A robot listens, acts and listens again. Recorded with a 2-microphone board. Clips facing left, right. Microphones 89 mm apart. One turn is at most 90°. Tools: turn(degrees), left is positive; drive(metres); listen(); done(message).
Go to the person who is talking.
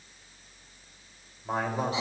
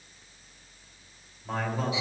turn(degrees=20)
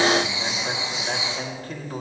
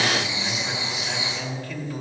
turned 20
turn(degrees=90)
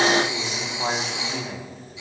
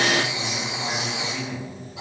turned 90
turn(degrees=55)
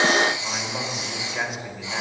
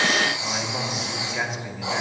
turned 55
drive(metres=1.0)
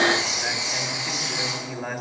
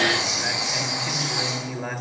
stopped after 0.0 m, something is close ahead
done("Blocked. The man speaking is further on, straight ahead.")